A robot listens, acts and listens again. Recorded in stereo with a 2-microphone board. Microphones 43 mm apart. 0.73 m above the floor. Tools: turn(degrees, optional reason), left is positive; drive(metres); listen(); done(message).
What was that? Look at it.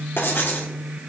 turn(degrees=60, reason="The writing: about 60° left or 120° left.")
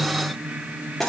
done("Found it: writing, straight ahead, under 1 m away.")